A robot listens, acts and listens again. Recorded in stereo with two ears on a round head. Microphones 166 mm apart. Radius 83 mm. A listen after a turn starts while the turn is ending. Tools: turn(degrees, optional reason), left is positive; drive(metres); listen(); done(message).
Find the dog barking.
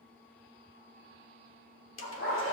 turn(degrees=55, reason="The dog barking: about 55° left or 125° left.")
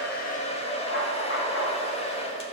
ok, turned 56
turn(degrees=60, reason="So it is at 60° left.")
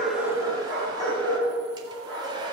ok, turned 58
done("Found it: a dog barking, straight ahead.")